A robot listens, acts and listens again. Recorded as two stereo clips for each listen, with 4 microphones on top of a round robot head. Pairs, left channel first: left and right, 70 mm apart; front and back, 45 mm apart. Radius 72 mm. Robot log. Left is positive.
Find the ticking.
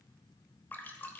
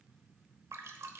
cmd idle
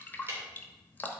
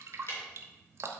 note: The ticking: 30° right.
cmd yaw -30
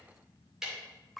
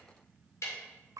note: The ticking is now 10° right.
cmd yaw -10
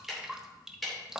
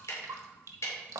end: Facing the ticking, 2 to 4 m away.